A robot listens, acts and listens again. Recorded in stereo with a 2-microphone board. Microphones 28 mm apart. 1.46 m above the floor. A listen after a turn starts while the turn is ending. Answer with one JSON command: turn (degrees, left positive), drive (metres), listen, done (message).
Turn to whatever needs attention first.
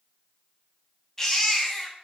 {"turn": 15}
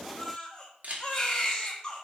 {"turn": 150}
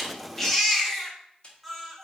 {"done": "Found it: a baby crying, straight ahead."}